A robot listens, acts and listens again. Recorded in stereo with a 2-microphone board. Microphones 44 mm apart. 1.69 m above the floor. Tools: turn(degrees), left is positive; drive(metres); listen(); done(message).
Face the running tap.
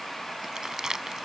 listen()
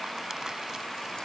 listen()
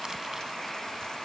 done("I can't make out a running tap, only crumpling.")